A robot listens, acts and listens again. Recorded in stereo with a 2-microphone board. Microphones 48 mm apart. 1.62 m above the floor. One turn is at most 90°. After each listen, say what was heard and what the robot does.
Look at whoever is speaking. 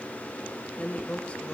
The woman speaking: about 25° left or 155° left. Turn 25° left.
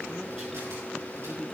Keep listening.
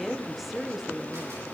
Facing the woman speaking.